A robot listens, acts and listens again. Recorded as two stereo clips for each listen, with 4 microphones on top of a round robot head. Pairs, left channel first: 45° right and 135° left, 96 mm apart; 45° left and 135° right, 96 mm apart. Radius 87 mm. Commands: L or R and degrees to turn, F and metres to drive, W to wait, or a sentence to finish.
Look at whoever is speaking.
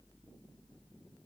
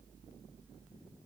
W
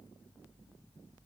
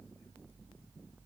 W
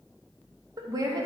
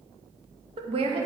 R165
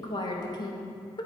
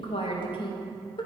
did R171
Facing the woman speaking.